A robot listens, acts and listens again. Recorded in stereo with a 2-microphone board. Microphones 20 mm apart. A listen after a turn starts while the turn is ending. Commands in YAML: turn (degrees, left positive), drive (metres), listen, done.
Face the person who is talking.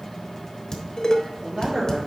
turn: -60
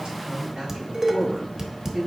turn: -70
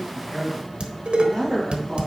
turn: -15
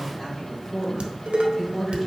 done: "Found it: a man speaking, straight ahead, over 4 m away."